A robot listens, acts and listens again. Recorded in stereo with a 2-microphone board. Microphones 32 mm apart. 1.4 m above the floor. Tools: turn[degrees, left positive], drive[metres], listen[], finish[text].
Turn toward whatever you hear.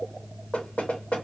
Thought: The knocking: about 40° left or 140° left.
Action: turn[40]
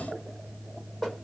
Action: finish[Found it: knocking, straight ahead, 1 to 2 m away.]